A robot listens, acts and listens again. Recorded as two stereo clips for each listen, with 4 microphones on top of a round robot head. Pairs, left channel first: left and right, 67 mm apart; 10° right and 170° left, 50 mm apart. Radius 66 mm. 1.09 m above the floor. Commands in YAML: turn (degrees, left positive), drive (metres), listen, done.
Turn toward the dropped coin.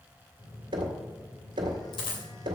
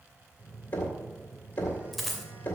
turn: 80
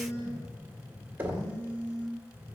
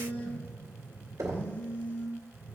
done: "Facing where the dropped coin came from. I can't hear it now."